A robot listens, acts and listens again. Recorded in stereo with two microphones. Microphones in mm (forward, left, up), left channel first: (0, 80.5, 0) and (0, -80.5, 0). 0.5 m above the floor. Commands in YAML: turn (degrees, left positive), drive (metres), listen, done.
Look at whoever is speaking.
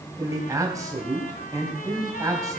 turn: -20
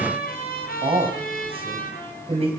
turn: -140
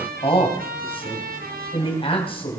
turn: 35
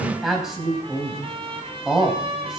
done: "Found it: a man speaking, straight ahead, 2 to 4 m away."